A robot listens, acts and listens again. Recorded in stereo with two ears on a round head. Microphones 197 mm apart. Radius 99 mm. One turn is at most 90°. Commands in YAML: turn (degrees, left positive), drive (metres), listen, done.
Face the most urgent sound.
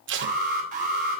turn: -40
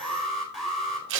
done: "Found it: an alarm, straight ahead, 2 to 4 m away."